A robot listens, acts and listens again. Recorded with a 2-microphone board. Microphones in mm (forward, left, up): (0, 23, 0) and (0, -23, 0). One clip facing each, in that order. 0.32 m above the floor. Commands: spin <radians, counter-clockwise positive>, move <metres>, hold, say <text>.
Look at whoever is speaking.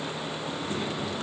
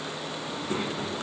spin -0.61
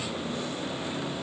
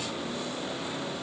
hold
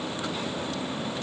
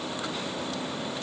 hold
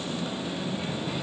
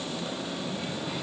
say Found it: a child speaking, straight ahead, 2 to 4 m away.